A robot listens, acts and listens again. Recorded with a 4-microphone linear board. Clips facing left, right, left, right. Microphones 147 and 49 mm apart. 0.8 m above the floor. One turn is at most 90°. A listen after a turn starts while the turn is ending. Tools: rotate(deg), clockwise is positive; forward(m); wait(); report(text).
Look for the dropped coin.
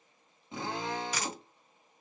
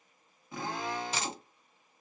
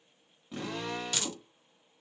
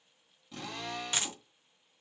rotate(25)
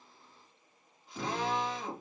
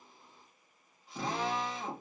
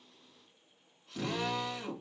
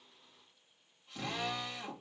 wait()
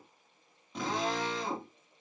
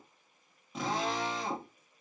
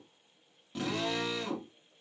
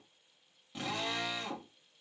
report("I heard a dropped coin, but can't make it out now. It was about straight ahead or 130° right.")